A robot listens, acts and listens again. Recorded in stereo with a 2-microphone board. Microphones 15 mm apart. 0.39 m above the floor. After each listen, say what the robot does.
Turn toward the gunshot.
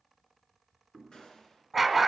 Turn 60° left.
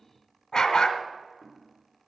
Keep listening.
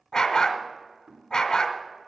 I heard a gunshot, but can't make it out now. It was about straight ahead or 60° left.